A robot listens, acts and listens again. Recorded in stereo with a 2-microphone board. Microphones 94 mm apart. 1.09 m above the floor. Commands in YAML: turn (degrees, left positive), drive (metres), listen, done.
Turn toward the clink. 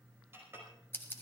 turn: -25
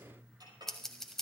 turn: -130
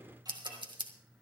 listen: true
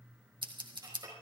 turn: -40
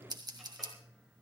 listen: true
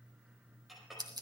done: "Facing the clink."